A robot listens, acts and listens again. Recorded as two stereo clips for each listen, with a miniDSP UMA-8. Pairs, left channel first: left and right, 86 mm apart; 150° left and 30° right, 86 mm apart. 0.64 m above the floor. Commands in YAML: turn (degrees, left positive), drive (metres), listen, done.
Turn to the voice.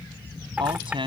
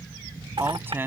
turn: -95
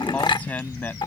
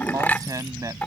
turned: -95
turn: 20
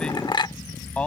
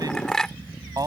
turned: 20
listen: true
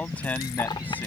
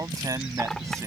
turn: 20
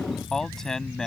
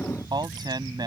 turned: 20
done: "Found it: a man speaking, straight ahead."